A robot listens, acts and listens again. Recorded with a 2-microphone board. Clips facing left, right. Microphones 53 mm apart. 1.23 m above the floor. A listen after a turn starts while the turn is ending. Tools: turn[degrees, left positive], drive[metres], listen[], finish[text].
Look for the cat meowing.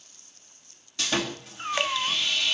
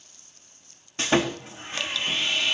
Thought: The cat meowing: about 65° left or 115° left.
Action: turn[65]
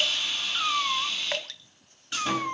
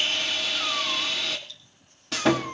Thought: So it is at 25° left.
Action: turn[25]
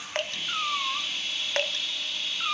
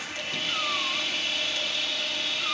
Thought: The cat meowing is now 15° left.
Action: turn[15]
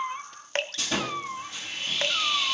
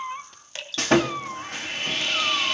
Action: finish[Found it: a cat meowing, straight ahead.]